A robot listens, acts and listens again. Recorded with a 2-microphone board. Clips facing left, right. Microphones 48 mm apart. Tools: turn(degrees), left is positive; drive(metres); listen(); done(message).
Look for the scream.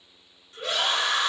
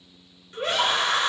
turn(degrees=-45)
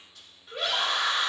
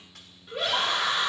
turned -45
done("Found it: a scream, straight ahead.")